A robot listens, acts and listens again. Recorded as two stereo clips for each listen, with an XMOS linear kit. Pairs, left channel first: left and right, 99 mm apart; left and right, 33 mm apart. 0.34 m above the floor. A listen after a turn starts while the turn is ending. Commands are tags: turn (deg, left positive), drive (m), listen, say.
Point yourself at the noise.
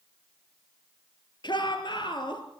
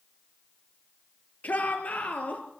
<turn deg="50"/>
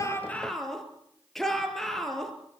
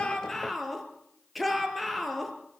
<say>Found it: a shout, straight ahead, over 4 m away.</say>